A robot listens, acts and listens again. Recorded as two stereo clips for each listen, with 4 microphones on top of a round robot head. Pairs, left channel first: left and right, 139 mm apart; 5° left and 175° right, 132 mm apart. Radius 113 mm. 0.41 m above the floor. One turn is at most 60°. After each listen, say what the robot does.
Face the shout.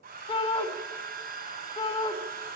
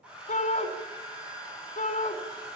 Turn 40° left.
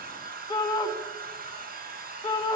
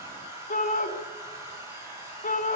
Turn 30° left.
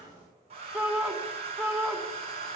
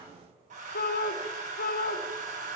Found it: a shout, straight ahead.